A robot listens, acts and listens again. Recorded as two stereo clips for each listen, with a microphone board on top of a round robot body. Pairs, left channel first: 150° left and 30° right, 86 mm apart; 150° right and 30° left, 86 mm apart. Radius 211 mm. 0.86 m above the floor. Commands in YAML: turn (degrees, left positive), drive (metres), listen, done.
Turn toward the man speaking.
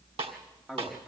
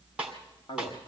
turn: -115
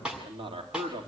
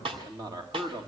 turn: -15
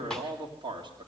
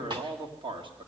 done: "Facing the man speaking, 2 to 4 m away."